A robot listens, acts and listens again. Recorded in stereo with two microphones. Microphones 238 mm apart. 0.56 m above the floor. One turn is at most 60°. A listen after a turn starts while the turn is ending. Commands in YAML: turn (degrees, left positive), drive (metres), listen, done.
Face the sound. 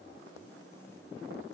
listen: true
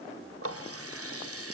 turn: -60
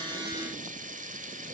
turn: -35
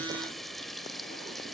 done: "Found it: a running tap, straight ahead, 1 to 2 m away."